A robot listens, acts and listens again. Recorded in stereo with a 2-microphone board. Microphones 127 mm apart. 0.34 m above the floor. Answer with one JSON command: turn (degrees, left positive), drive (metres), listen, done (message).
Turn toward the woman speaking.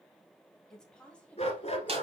{"turn": 30}
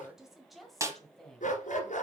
{"turn": 30}
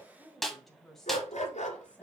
{"turn": 30}
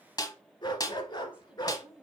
{"turn": -10}
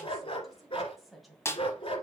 {"done": "Facing the woman speaking, 2 to 4 m away."}